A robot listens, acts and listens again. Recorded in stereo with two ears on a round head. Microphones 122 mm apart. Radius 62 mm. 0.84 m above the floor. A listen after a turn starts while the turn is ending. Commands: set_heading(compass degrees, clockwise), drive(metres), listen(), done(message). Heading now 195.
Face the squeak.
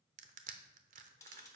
listen()
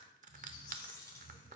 set_heading(125)
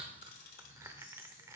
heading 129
set_heading(89)
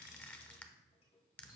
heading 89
done("Found it: a squeak, straight ahead.")